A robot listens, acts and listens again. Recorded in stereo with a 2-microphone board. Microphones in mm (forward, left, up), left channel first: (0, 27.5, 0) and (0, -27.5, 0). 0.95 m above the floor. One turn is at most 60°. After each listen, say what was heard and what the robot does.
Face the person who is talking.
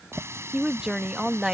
Turn 30° right.
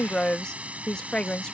So it is at 20° left. Turn 20° left.
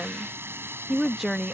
Found it: a woman speaking, straight ahead.